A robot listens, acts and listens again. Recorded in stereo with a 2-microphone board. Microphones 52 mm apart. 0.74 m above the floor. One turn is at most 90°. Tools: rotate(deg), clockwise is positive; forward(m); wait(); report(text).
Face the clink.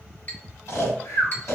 rotate(-35)
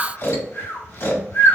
wait()
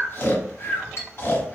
rotate(-90)
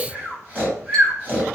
rotate(-20)
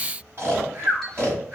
wait()
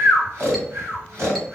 report("I heard a clink from this way, but can't make it out now.")